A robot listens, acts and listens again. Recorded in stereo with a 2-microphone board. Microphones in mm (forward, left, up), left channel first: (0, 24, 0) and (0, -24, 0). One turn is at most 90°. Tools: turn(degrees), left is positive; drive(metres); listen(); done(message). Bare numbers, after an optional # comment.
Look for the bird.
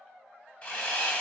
listen()
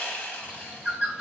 # The bird: about 20° right or 160° right.
turn(-20)
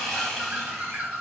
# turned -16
# So it is at 145° right.
turn(-90)
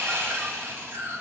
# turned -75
# The bird is now 65° right.
turn(-65)
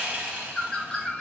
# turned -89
# The bird is now 20° left.
turn(20)
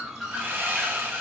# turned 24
done("Facing the bird.")